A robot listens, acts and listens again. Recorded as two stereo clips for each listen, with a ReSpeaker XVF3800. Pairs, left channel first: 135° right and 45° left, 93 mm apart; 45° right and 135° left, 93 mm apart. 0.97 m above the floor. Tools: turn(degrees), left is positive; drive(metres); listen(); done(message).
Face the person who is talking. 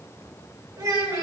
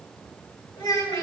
done("Facing the child speaking, 2 to 4 m away.")